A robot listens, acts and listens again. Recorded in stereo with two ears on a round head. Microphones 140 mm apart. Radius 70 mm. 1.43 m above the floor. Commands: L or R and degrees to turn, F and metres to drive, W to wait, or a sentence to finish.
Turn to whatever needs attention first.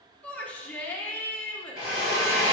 L30
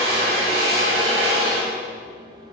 W
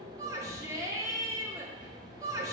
R20
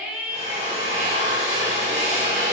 Facing the shout.